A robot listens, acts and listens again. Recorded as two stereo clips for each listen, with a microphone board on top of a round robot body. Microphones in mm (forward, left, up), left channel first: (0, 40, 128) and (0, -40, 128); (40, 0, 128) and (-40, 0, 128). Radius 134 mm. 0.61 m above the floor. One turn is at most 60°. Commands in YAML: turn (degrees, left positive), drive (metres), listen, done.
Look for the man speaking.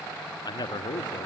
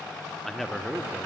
turn: 60
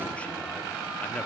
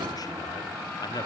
turn: 25
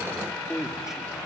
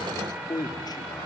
turn: -10
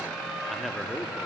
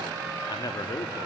done: "Facing the man speaking."